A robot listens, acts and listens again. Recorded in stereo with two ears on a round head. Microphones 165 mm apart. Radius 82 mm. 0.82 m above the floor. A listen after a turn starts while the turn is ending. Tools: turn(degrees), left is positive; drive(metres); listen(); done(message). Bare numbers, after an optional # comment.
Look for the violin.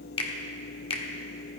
listen()
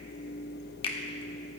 listen()
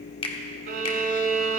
# The violin: about 55° right or 125° right.
turn(-55)
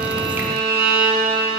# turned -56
# So it is at 70° right.
turn(-70)
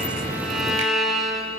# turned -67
done("Found it: a violin, straight ahead.")